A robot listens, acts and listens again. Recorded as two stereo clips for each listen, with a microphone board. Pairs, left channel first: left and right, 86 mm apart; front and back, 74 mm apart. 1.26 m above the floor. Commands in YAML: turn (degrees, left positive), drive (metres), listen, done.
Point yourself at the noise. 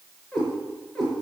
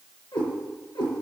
done: "Found it: a cat meowing, straight ahead, over 4 m away."